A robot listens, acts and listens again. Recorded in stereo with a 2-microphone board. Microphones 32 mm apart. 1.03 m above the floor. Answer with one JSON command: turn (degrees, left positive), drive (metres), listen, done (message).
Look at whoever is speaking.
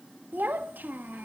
{"turn": -90}
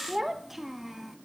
{"done": "Facing the child speaking."}